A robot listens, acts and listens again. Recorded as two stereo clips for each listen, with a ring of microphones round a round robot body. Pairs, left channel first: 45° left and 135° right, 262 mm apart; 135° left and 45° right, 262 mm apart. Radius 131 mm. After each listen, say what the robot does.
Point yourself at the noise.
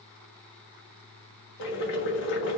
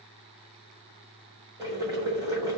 Turn 30° left.
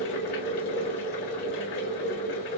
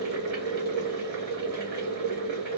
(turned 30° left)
Found it: boiling, straight ahead.